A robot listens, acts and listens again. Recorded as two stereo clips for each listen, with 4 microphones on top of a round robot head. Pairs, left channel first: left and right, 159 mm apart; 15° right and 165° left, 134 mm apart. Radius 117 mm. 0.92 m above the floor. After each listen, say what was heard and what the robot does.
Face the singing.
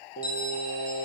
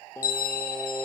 The singing: 65° left. Turn 65° left.
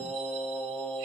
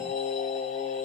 The singing is now 10° left. Turn 10° left.
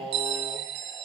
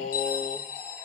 Found it: singing, straight ahead.